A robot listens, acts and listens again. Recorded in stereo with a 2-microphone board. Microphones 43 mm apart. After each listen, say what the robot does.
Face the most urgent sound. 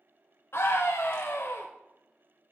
Turn 70° left.
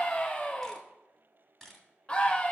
Turn 30° left.
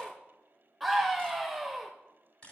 Found it: a scream, straight ahead, under 1 m away.